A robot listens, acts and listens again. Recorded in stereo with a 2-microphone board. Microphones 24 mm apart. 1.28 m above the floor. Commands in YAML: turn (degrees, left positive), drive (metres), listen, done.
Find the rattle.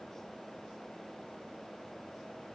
listen: true
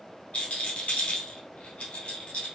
turn: 65
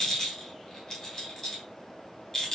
turn: 30
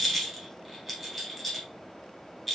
turn: 10
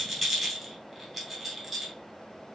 done: "Facing the rattle."